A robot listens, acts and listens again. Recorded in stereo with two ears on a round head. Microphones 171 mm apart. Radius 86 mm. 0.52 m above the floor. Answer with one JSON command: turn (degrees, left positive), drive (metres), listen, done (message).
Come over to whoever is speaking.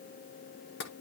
{"listen": true}
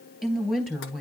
{"turn": 30}
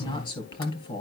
{"turn": 150}
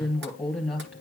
{"drive": 1.0}
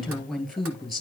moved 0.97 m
{"drive": 1.0}
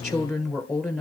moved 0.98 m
{"drive": 1.0}
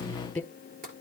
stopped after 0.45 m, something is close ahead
{"done": "Arrived at the woman speaking, straight ahead."}